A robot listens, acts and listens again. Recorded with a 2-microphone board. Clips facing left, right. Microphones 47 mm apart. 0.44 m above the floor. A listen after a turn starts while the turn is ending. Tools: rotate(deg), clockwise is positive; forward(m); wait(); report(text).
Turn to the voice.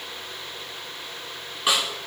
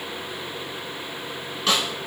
wait()
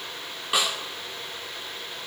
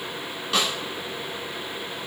wait()
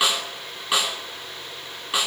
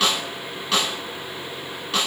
report("I can't make out anyone speaking, only a snare drum.")